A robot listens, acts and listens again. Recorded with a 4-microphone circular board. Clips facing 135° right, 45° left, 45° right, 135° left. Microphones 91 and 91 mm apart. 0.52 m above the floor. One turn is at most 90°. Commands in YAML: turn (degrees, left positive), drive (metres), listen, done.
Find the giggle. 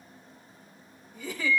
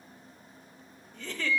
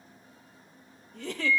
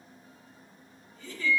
turn: -55
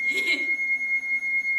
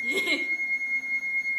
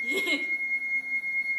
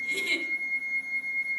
done: "Facing the giggle."